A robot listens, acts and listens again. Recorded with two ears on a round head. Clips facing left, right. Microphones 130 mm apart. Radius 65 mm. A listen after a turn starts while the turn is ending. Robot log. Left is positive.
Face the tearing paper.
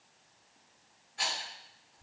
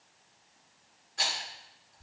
cmd idle
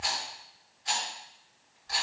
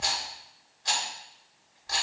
cmd idle
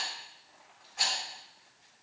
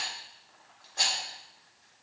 note: The tearing paper: about 20° left or 160° left.
cmd yaw +20
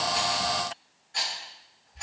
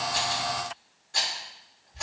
cmd idle
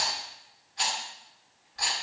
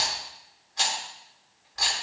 cmd idle
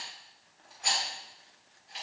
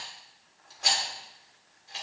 end: I heard tearing paper, but can't make it out now. It was about straight ahead or 140° left.